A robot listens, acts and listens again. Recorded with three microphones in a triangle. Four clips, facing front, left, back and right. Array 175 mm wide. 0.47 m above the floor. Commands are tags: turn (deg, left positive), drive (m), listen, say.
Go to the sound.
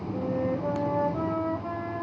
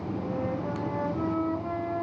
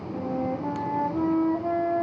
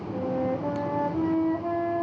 <turn deg="-145"/>
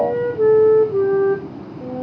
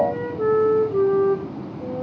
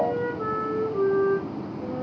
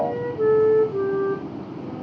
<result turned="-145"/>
<drive m="1.0"/>
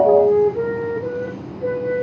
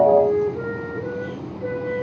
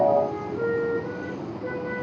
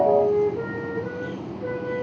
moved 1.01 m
<drive m="1.0"/>
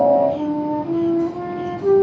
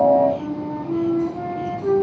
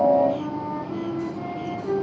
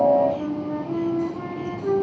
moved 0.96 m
<drive m="1.0"/>
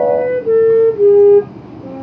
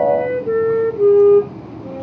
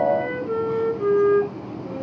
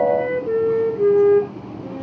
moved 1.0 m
<drive m="1.0"/>
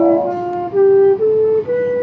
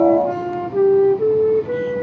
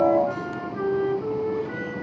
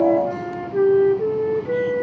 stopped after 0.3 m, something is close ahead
<say>Arrived at the flute, straight ahead.</say>